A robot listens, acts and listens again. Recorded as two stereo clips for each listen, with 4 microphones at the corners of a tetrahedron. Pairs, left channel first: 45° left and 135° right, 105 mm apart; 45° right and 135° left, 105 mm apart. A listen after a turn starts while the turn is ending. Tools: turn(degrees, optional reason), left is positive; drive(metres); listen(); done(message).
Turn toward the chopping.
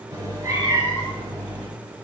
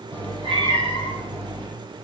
listen()
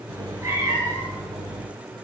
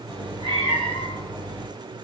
listen()
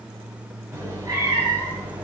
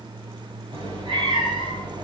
done("I can't make out chopping, only a cat meowing.")